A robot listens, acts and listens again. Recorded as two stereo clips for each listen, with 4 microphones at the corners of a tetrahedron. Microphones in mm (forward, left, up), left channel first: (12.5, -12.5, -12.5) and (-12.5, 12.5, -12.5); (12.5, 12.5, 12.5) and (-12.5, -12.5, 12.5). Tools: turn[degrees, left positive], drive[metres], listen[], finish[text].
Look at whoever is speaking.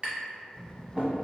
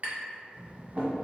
Thought: The child speaking: 130° left.
Action: turn[130]
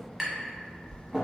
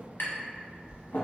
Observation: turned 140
Thought: The child speaking is now 10° right.
Action: turn[-10]
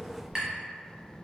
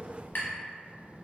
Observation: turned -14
Action: finish[Found it: a child speaking, straight ahead.]